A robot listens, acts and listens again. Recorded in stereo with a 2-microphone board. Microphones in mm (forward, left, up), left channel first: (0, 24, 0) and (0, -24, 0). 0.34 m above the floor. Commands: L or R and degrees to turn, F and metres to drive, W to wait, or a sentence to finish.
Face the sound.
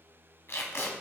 L65
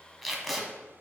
Found it: tape being pulled, straight ahead, 1 to 2 m away.